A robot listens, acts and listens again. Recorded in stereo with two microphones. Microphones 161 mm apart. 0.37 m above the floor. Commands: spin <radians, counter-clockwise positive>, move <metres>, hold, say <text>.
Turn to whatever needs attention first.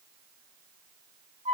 hold
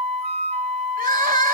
spin -1.05
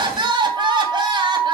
spin -0.52
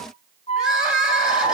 say Facing the crying.